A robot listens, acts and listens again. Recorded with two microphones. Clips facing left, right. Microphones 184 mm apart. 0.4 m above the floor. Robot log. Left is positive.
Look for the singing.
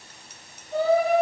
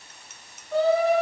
cmd yaw -90
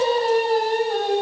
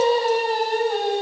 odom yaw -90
end: Facing the singing.